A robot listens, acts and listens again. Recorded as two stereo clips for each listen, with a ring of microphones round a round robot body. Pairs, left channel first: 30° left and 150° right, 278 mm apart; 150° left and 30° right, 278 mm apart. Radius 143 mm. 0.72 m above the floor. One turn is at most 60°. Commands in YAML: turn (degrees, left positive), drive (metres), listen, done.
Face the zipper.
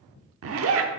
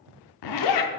turn: 60
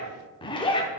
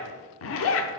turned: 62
turn: 60
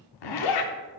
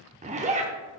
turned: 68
turn: 40
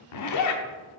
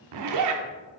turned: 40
done: "Found it: a zipper, straight ahead."